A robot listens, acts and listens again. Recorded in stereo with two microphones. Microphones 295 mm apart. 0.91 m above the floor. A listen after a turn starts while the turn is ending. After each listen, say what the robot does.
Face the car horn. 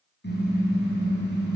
Turn 35° left.
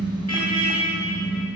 Turn 105° left.
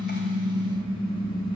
Turn 15° left.
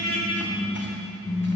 Facing the car horn, over 4 m away.